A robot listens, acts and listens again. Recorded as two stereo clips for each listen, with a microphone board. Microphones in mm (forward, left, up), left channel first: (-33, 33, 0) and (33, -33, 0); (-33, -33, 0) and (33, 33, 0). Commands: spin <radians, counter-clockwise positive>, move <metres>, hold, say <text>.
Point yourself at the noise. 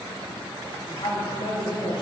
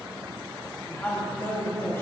spin 2.79
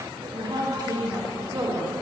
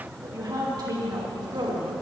spin 0.17
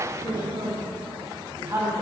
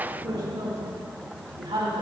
spin 0.26
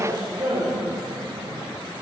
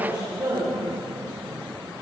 say Facing the woman speaking, 2 to 4 m away.